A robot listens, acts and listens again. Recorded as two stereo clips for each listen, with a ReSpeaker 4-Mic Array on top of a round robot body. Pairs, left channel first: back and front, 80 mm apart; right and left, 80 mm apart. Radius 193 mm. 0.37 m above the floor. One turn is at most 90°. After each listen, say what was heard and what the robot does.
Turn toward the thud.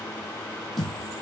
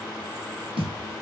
The thud: 90° left. Turn 90° left.
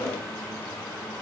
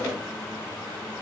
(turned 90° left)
Facing where the thud came from. I can't hear it now.